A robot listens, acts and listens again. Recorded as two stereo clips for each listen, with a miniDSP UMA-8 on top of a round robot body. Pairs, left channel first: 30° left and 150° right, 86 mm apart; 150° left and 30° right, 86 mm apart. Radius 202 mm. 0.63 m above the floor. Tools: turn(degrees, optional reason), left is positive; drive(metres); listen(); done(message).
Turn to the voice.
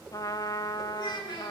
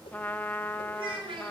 done("Facing the child speaking, over 4 m away.")